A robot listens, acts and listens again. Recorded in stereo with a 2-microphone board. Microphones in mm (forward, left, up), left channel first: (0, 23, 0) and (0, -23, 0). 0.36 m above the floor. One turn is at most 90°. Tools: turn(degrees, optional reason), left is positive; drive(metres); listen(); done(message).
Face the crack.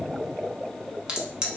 turn(degrees=-20, reason="The crack: about 20° right or 160° right.")
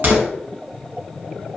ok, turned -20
turn(degrees=-90, reason="So it is at 140° right.")
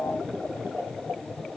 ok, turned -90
turn(degrees=-50, reason="Nothing new. It was at 50° right.")
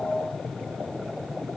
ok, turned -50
done("Facing where the crack came from. I can't hear it now.")